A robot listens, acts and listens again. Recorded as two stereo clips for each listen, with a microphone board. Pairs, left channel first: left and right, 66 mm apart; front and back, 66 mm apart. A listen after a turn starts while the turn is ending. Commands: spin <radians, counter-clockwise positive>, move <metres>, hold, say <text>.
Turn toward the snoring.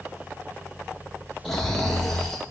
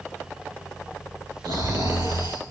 spin 3.05
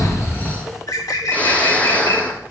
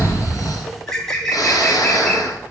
spin 0.44
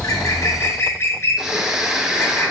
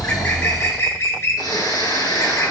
spin -0.17
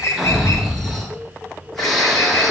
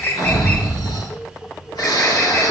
say Found it: snoring, straight ahead.